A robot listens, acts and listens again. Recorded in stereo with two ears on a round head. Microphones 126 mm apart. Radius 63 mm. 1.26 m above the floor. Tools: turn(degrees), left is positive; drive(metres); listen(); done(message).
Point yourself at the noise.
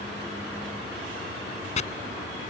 turn(degrees=50)
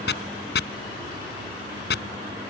turn(degrees=75)
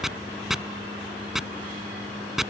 done("Facing the chopping.")